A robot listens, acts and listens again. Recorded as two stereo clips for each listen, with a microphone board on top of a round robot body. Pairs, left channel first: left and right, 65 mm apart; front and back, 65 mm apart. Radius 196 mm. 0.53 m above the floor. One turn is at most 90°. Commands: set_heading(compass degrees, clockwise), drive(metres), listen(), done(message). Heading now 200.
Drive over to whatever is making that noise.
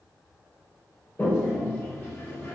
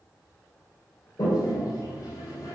set_heading(170)
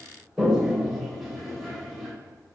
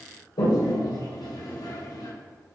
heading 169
drive(1.0)
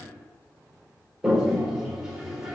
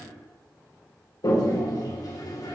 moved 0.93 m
drive(1.0)
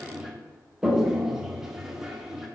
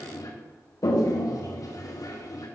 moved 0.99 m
set_heading(179)
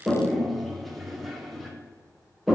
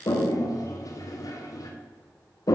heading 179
drive(1.0)
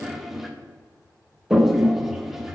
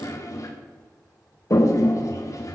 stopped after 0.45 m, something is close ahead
done("I am next to the toilet flushing.")